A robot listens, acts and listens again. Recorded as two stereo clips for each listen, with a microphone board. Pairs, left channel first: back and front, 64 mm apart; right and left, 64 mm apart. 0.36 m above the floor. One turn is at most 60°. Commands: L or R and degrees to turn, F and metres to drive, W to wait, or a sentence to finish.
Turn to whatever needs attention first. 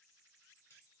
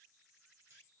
W
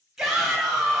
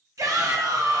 L60
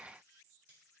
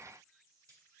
L25
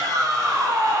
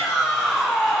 Found it: a shout, straight ahead.